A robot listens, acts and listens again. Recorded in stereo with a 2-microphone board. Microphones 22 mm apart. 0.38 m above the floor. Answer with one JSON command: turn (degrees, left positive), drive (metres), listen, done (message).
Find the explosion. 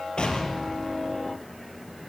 {"turn": 55}
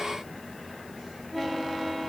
{"listen": true}
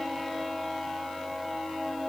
{"done": "I heard an explosion, but can't make it out now. It was about straight ahead or 70° left."}